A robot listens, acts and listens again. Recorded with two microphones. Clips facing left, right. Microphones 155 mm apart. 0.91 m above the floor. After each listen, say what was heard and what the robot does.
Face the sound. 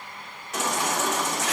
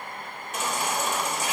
The baby crying: about 75° left or 105° left. Turn 75° left.
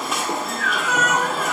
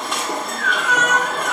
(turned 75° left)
Found it: a baby crying, straight ahead, 1 to 2 m away.